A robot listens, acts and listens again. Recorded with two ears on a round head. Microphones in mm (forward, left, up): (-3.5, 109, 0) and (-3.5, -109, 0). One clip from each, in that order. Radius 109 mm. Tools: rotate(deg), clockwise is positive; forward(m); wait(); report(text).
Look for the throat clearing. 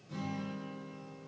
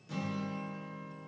wait()
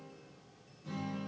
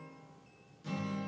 wait()
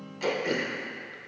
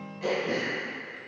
rotate(-60)
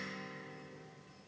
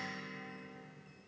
wait()
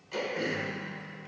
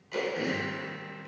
report("Facing the throat clearing.")